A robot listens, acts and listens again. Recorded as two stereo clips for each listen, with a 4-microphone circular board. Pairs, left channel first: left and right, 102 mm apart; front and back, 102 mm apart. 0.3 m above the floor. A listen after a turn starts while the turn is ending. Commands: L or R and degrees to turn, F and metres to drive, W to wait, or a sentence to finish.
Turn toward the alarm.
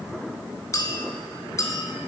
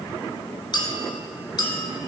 W
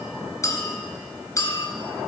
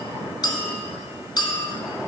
W
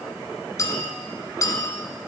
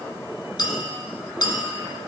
I can't make out an alarm, only a clink.